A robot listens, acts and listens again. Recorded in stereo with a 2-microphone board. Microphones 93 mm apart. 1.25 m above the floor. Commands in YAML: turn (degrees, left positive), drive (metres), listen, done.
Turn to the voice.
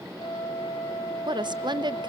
turn: -55
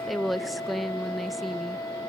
done: "Found it: a woman speaking, straight ahead, under 1 m away."